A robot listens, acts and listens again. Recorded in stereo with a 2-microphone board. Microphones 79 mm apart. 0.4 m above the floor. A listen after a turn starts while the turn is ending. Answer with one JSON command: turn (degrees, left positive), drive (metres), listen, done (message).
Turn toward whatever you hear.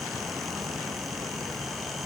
{"listen": true}
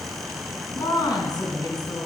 {"turn": 55}
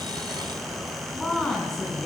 {"done": "Facing the woman speaking."}